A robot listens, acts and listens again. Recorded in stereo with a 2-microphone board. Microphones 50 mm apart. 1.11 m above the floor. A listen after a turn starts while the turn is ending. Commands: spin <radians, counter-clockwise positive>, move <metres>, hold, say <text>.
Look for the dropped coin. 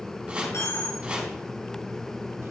spin 1.22
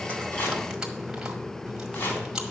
hold
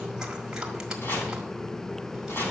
say I heard a dropped coin, but can't make it out now. It was about straight ahead or 40° left.